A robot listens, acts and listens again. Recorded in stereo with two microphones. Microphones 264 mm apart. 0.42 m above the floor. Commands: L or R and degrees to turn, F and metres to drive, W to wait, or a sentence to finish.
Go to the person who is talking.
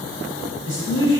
R60
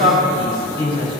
R20
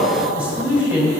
F1.0
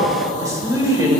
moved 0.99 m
R20
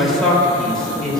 F1.0
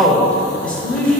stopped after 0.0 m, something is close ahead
I am next to the man speaking.